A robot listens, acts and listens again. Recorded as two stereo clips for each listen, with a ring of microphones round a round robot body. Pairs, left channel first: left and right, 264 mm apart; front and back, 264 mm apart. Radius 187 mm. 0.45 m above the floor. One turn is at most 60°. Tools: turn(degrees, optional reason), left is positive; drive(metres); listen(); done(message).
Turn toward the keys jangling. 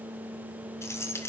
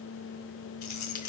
turn(degrees=10, reason="The keys jangling: 10° left.")
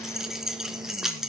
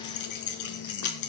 done("Found it: keys jangling, straight ahead, 2 to 4 m away.")